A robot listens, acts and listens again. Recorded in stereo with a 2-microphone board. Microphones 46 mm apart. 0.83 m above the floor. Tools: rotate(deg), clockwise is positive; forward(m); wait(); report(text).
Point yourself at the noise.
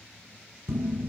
rotate(70)
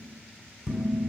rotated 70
report("Facing the dishes clattering, 2 to 4 m away.")